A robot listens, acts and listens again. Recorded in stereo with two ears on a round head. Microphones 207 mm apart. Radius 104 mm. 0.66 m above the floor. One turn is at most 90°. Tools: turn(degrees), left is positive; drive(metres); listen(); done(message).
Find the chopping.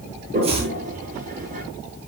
turn(degrees=-25)
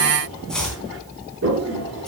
done("Found it: chopping, straight ahead, 2 to 4 m away.")